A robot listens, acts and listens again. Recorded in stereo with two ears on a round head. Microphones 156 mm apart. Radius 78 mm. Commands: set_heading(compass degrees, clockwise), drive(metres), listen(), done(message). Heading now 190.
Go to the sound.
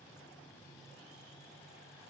listen()
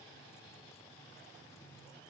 listen()
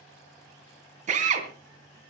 set_heading(230)
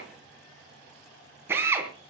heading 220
set_heading(235)
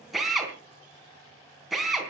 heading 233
drive(1.0)
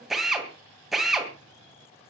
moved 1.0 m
drive(1.0)
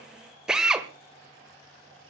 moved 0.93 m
drive(1.0)
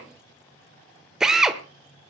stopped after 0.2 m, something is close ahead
done("I am next to the drill.")